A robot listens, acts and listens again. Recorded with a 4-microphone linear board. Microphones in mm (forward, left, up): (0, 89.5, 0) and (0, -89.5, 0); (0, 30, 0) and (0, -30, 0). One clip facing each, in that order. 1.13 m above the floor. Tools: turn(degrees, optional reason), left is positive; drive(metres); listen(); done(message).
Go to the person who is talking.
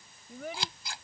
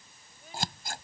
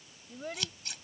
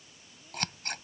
turn(degrees=90)
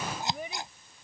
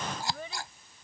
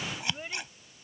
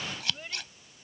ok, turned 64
turn(degrees=15, reason="So it is at 15° left.")
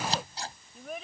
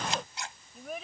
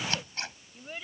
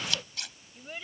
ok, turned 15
drive(metres=1.0)
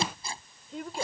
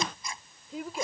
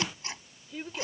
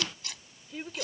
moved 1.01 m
drive(metres=1.0)
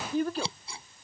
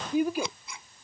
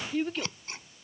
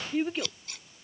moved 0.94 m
turn(degrees=-15, reason="The child speaking is now 15° right.")
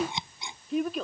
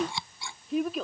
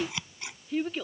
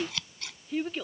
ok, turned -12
drive(metres=1.0)
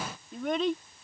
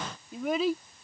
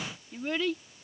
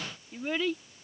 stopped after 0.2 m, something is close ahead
done("Arrived at the child speaking, straight ahead.")